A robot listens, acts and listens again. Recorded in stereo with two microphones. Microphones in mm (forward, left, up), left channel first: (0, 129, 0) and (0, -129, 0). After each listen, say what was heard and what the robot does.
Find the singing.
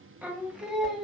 Turn 30° left.
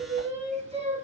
So it is at 25° right. Turn 25° right.
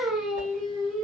Found it: singing, straight ahead, 2 to 4 m away.